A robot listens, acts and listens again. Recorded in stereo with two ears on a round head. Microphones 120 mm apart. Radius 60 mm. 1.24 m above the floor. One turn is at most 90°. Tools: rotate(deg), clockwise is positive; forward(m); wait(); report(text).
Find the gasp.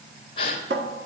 rotate(-35)
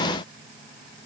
wait()
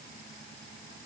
report("I heard a gasp, but can't make it out now. It was about straight ahead or 110° left.")